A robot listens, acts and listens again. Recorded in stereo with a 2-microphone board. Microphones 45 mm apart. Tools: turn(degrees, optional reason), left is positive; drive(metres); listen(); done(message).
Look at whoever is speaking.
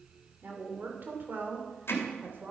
turn(degrees=-45, reason="The woman speaking: about 45° right or 135° right.")
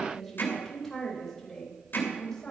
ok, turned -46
turn(degrees=10, reason="So it is at 10° left.")
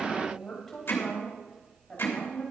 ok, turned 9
turn(degrees=10, reason="The woman speaking is now 10° left.")
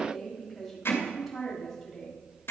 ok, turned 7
done("Facing the woman speaking.")